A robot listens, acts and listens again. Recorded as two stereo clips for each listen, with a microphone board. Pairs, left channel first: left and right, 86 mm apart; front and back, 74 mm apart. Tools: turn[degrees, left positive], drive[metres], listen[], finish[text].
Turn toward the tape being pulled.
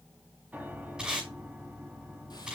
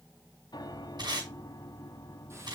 Thought: The tape being pulled: 170° right.
Action: turn[-170]
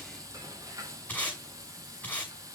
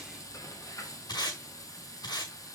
Thought: The tape being pulled is now 20° left.
Action: turn[20]
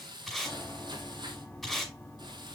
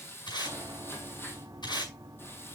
Action: finish[Found it: tape being pulled, straight ahead.]